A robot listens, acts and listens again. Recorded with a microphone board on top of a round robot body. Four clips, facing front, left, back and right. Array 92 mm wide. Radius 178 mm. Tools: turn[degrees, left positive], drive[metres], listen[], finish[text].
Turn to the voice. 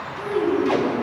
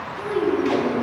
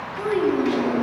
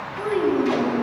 Thought: The child speaking: 145° right.
Action: turn[-145]
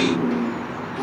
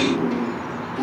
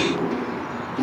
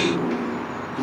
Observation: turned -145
Thought: The child speaking is now 20° left.
Action: turn[20]
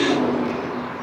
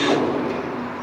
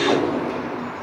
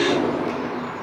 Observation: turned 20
Action: listen[]
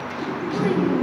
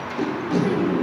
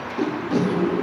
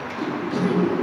Action: finish[Found it: a child speaking, straight ahead, 2 to 4 m away.]